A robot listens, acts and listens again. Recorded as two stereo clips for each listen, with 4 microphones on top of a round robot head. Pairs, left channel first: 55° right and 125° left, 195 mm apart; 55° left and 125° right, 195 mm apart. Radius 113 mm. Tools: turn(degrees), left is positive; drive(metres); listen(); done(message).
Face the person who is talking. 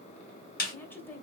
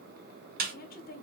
turn(degrees=25)
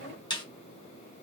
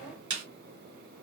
listen()
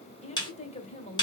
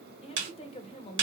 done("Facing the woman speaking, 1 to 2 m away.")